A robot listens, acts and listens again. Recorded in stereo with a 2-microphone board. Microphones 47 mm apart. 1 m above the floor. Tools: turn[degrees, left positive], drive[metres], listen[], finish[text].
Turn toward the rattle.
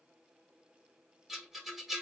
Action: turn[-30]
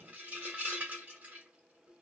Thought: So it is at 145° right.
Action: turn[-145]
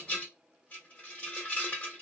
Thought: The rattle is now 35° left.
Action: turn[35]
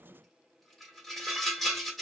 Action: finish[Found it: a rattle, straight ahead, 1 to 2 m away.]